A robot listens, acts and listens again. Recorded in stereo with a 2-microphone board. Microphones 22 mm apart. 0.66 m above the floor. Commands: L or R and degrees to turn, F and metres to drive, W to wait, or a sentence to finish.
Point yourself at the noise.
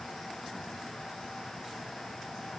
W
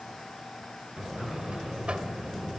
R60
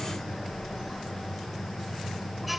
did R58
Found it: a buzzer, straight ahead, 1 to 2 m away.